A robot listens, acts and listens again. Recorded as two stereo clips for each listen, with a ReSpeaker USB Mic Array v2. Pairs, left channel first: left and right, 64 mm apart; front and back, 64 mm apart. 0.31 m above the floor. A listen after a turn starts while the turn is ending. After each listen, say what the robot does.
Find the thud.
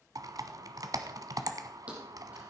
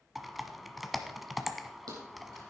Turn 160° right.
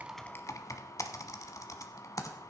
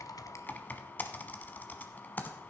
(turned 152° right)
Facing where the thud came from. I can't hear it now.